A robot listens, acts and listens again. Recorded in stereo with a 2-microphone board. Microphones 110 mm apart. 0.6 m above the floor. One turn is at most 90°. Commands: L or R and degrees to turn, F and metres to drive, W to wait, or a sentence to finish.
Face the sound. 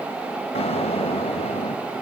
L70
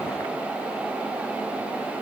W
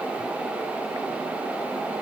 I heard an explosion, but can't make it out now. It was about straight ahead or 40° left.